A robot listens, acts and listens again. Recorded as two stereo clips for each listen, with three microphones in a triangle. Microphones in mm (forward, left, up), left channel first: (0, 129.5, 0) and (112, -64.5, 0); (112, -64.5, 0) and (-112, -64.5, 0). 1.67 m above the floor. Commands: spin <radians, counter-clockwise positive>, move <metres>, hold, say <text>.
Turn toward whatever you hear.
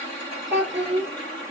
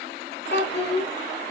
spin -0.61
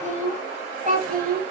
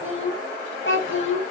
spin -0.26
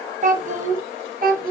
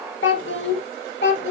spin -0.35
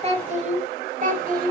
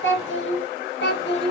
spin -0.35
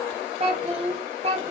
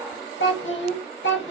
say Found it: a child speaking, straight ahead, 1 to 2 m away.